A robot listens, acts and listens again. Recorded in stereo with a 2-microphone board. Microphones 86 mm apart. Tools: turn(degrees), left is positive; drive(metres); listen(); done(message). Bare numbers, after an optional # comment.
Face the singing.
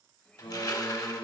# The singing: about 65° left or 115° left.
turn(65)
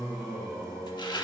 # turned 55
# So it is at 10° left.
turn(10)
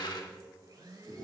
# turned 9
done("Facing the singing.")